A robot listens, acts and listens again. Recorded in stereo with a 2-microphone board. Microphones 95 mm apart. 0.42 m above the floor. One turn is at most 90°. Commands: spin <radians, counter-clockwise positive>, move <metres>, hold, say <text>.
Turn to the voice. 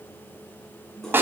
hold
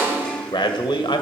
spin 0.96
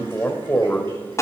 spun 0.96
spin 0.44
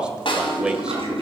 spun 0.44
spin -0.17
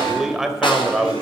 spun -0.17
say Found it: a man speaking, straight ahead, 1 to 2 m away.